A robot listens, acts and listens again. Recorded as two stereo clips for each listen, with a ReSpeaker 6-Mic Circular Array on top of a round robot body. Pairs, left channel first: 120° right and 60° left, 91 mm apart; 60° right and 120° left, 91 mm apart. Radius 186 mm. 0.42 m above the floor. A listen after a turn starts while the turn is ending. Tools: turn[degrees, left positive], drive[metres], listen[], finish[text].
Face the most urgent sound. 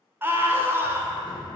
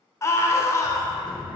Action: finish[Found it: a scream, straight ahead, 2 to 4 m away.]